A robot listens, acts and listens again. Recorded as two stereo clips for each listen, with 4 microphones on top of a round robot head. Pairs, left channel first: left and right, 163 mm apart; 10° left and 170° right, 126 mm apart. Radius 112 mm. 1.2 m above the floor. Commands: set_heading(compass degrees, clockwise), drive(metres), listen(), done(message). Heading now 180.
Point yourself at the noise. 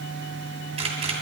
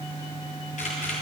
set_heading(215)
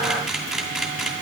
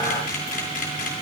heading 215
done("Found it: a camera shutter, straight ahead, 2 to 4 m away.")